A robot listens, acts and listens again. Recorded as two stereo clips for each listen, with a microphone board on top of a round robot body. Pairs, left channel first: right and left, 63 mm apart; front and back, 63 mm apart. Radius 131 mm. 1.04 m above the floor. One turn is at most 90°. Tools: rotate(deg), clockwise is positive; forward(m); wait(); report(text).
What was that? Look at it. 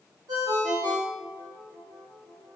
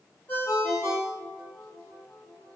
rotate(-60)
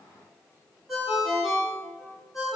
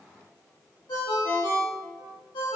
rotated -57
report("Facing the ringtone.")